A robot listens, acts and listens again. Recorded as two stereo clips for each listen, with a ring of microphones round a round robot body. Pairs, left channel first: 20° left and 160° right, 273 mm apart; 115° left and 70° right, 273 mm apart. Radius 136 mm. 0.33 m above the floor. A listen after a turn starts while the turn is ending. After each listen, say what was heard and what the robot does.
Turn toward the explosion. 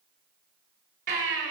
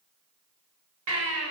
Keep listening.
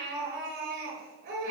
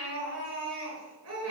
Keep listening.
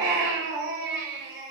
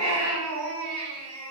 I can't make out an explosion, only a baby crying.